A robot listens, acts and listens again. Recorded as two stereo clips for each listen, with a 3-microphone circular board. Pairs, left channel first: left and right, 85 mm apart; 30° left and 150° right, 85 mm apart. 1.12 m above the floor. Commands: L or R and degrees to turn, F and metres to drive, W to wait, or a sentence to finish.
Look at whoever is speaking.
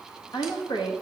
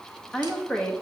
L105
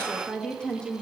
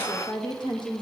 L15
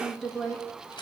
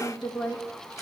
Found it: a woman speaking, straight ahead, 1 to 2 m away.